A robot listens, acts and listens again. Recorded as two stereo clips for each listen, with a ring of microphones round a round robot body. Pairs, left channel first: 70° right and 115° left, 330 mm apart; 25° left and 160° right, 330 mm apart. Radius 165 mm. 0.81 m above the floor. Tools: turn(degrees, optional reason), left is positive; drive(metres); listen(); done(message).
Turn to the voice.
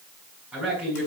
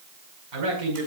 turn(degrees=-160, reason="The man speaking: 160° right.")
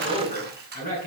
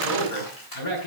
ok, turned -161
done("Found it: a man speaking, straight ahead, over 4 m away.")